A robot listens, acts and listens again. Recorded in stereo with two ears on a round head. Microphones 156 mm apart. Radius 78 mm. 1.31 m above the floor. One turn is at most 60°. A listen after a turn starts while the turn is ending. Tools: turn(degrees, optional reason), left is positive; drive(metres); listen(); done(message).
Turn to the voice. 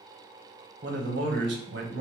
turn(degrees=-60, reason="The man speaking: about 60° right or 120° right.")
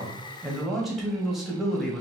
done("Facing the man speaking, 1 to 2 m away.")